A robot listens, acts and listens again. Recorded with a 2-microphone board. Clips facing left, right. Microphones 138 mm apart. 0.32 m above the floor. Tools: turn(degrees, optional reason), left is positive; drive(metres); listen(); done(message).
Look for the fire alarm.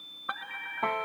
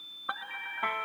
turn(degrees=30)
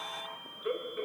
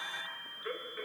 turn(degrees=155, reason="So it is at 155° left.")
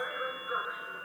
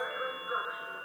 done("Facing the fire alarm.")